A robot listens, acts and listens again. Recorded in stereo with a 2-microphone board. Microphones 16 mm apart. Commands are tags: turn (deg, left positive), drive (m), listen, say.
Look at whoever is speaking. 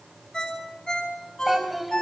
<turn deg="-30"/>
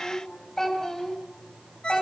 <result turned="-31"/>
<turn deg="25"/>
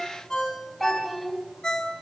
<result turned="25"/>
<say>Found it: a child speaking, straight ahead, over 4 m away.</say>